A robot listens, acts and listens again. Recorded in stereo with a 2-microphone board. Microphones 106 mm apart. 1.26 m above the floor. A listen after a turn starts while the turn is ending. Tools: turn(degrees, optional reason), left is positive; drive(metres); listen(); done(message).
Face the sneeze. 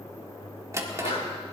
turn(degrees=75, reason="The sneeze: about 75° left or 105° left.")
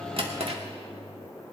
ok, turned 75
listen()
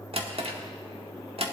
done("I heard a sneeze, but can't make it out now. It was about straight ahead or 30° left.")